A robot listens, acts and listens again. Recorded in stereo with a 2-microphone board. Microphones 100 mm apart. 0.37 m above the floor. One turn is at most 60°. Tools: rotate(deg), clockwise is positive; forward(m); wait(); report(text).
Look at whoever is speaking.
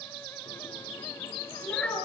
rotate(-30)
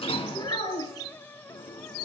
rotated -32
rotate(-60)
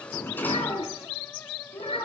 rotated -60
rotate(-60)
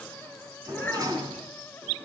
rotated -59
rotate(-15)
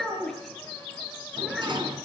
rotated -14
report("Facing the child speaking, 2 to 4 m away.")